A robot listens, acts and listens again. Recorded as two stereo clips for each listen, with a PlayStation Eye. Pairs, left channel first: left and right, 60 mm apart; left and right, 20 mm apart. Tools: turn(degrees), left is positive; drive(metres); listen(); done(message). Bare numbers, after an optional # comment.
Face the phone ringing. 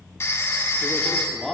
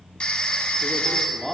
# The phone ringing: about 50° left or 130° left.
turn(50)
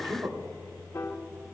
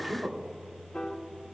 listen()
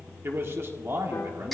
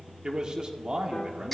listen()
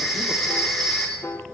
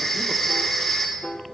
done("Facing the phone ringing.")